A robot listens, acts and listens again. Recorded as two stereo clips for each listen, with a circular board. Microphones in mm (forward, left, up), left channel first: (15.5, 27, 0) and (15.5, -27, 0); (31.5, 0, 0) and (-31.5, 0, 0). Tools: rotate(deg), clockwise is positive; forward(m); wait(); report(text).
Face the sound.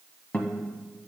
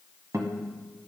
rotate(-155)
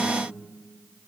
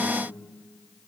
wait()
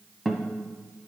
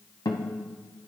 report("Found it: a guitar, straight ahead.")